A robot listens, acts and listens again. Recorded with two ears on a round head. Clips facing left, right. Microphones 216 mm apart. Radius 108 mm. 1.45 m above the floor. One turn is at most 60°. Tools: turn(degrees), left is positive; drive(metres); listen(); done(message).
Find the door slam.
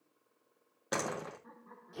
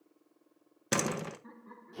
turn(degrees=-40)
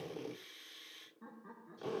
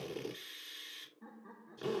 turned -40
listen()
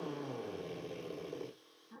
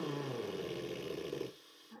done("I heard a door slam, but can't make it out now. It was about straight ahead or 100° right.")